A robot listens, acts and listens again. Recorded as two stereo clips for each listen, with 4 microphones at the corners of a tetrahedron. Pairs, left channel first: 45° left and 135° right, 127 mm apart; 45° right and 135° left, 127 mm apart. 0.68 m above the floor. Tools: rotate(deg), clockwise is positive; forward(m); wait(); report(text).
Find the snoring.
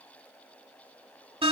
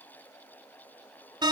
wait()
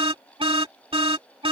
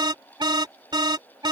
wait()
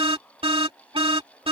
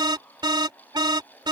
report("I can't make out snoring to turn to.")